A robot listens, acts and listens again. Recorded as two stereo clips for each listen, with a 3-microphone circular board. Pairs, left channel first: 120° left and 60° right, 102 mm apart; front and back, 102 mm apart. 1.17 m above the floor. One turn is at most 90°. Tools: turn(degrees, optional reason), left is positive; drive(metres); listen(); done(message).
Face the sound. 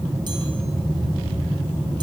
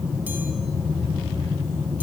listen()
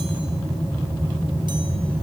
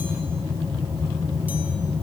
listen()
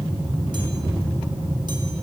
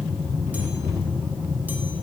done("I can't make out anything to turn to.")